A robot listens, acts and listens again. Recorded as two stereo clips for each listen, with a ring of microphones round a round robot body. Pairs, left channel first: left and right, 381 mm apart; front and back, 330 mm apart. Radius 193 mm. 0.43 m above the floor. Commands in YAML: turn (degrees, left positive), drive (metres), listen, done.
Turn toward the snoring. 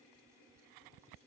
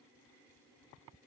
listen: true
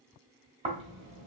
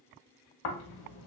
turn: -15
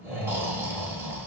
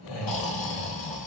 done: "Found it: snoring, straight ahead."